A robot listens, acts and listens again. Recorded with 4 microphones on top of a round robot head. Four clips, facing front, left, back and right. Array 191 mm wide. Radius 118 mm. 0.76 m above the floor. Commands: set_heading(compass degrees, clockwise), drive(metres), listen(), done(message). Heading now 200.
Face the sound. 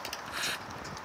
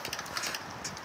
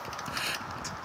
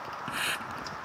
set_heading(310)
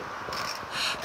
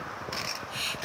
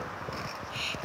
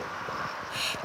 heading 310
done("Found it: a hiss, straight ahead.")